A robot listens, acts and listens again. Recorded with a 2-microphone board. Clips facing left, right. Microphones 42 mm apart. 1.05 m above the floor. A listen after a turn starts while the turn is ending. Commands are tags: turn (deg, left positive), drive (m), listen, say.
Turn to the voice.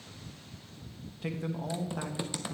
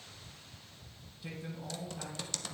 <turn deg="65"/>
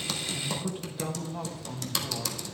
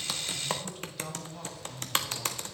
<turn deg="20"/>
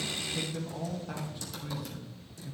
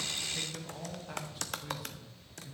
<say>Facing the man speaking, 1 to 2 m away.</say>